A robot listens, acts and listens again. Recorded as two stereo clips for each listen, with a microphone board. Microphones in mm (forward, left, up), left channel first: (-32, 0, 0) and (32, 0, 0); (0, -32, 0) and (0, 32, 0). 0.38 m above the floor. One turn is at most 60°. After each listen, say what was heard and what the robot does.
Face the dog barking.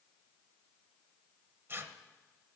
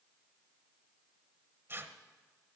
Keep listening.
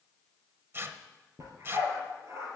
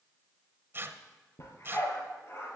The dog barking: 45° right. Turn 45° right.
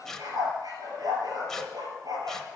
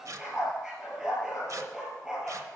The dog barking is now 10° left. Turn 10° left.
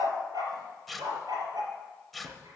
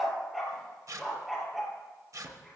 Found it: a dog barking, straight ahead.